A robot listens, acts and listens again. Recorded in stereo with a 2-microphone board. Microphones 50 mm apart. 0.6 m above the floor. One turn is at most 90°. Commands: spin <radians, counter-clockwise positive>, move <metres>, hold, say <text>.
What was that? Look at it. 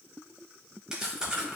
spin -0.52
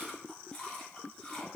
spin 0.26
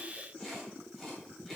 say Facing the chewing.